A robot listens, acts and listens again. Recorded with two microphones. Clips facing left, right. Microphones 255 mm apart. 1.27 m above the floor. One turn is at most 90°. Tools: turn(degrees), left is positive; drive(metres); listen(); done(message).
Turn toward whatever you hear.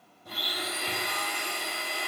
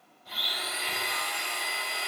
turn(degrees=55)
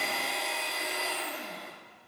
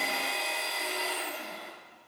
done("Facing the blender.")